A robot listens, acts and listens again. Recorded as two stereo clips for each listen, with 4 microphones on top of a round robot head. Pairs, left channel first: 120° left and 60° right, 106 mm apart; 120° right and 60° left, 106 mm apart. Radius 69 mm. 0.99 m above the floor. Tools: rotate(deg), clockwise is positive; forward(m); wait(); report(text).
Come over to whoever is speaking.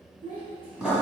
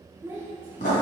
rotate(15)
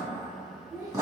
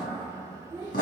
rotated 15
forward(1.0)
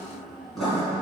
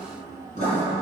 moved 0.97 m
wait()
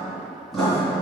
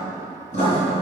wait()
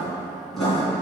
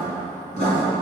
report("Facing where the child speaking came from. I can't hear it now. I did not reach it.")